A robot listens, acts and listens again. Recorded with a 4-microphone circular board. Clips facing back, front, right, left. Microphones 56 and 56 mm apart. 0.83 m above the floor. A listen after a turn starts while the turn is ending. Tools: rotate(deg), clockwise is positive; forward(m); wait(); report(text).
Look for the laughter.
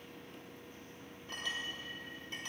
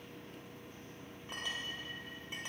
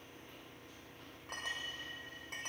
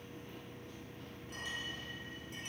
wait()
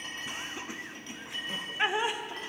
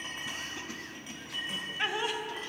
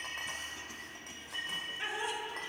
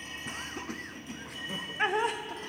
rotate(-115)
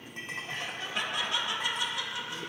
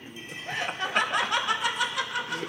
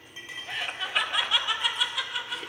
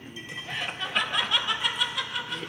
report("Found it: laughter, straight ahead, under 1 m away.")